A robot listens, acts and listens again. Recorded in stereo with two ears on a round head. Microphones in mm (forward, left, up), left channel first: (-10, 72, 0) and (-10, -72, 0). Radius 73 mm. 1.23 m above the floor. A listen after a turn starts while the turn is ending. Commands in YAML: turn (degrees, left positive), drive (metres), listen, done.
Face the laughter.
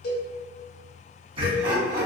turn: -25
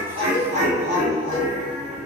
turn: -30
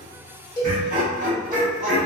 turn: -135
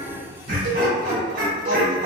turn: -45
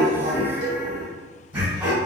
turn: -10
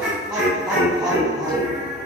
done: "Facing the laughter, 2 to 4 m away."